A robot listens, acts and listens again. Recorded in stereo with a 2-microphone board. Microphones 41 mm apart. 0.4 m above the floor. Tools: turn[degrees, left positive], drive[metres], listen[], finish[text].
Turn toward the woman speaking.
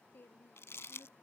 Thought: The woman speaking: about 55° left or 125° left.
Action: turn[55]
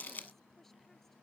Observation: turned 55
Action: listen[]
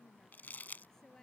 Thought: So it is at 15° left.
Action: turn[15]
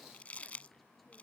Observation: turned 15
Action: listen[]
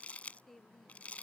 Action: finish[Facing the woman speaking.]